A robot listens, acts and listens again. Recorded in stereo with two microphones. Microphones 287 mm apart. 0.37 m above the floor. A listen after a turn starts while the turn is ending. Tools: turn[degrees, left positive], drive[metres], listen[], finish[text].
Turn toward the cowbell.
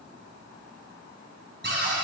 Action: listen[]
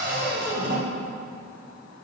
Action: listen[]
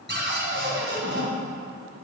Action: finish[I can't make out a cowbell to turn to.]